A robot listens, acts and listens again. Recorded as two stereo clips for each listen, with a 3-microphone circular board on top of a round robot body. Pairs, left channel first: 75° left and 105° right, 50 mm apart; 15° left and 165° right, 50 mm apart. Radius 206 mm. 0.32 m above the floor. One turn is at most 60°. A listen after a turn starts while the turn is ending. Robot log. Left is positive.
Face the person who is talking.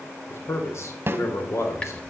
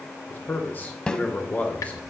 note: The man speaking: 75° left.
cmd yaw +60
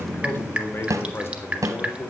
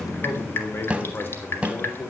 note: The man speaking is now 55° left.
cmd yaw +55
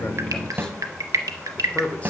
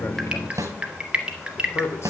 note: The man speaking is now 15° left.
cmd yaw +15
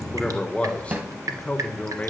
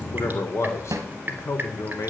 note: The man speaking is now 15° left.
cmd yaw +15
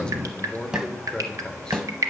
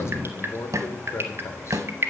end: Facing the man speaking.